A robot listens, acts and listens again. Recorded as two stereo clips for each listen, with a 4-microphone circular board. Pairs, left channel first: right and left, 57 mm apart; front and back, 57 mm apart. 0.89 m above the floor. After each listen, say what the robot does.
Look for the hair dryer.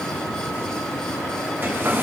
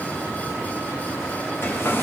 Turn 40° left.
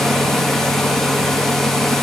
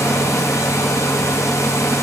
Facing the hair dryer, under 1 m away.